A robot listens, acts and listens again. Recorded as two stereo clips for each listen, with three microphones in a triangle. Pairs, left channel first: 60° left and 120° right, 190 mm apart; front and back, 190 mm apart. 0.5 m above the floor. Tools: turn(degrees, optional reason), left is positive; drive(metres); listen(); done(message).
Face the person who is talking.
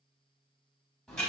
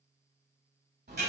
listen()
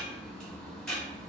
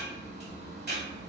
listen()
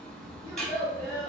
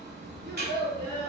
turn(degrees=-10, reason="The child speaking: 10° right.")
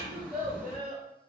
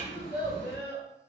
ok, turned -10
turn(degrees=-15, reason="The child speaking is now 15° right.")
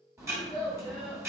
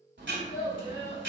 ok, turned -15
turn(degrees=-15, reason="The child speaking is now 15° right.")
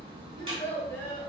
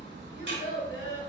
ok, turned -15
done("Found it: a child speaking, straight ahead, 2 to 4 m away.")